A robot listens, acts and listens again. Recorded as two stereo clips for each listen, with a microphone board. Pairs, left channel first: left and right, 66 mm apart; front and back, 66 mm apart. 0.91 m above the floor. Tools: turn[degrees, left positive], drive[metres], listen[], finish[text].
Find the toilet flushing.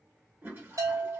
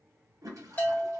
Thought: The toilet flushing: 145° right.
Action: turn[-145]
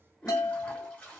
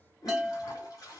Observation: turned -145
Thought: The toilet flushing is now 20° left.
Action: turn[20]
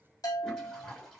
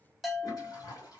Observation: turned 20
Thought: The toilet flushing is now 10° left.
Action: turn[10]
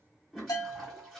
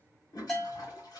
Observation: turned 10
Action: finish[Facing the toilet flushing.]